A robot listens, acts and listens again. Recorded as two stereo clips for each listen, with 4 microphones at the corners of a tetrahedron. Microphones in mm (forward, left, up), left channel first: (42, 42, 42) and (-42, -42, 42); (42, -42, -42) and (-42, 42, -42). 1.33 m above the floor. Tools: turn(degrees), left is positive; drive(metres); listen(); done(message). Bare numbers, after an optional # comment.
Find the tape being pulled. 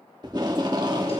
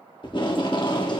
# The tape being pulled: 85° right.
turn(-85)
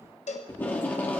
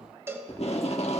# The tape being pulled is now 30° right.
turn(-30)
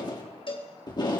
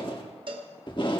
done("Found it: tape being pulled, straight ahead.")